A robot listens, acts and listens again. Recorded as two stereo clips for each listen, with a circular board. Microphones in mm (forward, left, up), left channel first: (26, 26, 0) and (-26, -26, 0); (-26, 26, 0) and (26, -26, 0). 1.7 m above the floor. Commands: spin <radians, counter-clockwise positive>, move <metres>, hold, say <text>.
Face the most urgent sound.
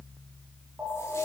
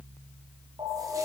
spin -1.05
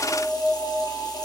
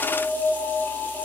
spin 0.26
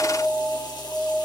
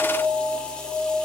say Facing the alarm.